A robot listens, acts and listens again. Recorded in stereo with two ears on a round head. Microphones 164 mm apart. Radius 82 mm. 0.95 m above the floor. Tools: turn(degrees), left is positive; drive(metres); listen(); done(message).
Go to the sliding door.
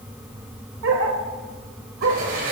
turn(degrees=-55)
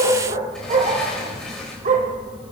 drive(metres=1.0)
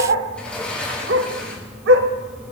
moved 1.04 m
drive(metres=1.0)
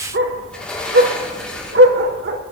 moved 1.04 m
drive(metres=1.0)
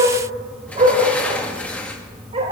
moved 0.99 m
turn(degrees=10)
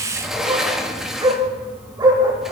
drive(metres=1.0)
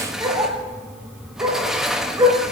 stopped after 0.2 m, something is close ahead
done("Arrived at the sliding door, straight ahead.")